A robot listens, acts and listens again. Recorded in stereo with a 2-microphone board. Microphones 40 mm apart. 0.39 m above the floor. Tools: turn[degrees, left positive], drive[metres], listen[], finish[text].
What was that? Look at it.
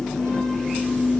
Action: listen[]
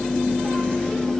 Action: listen[]
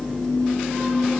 Action: finish[I can't make out anything.]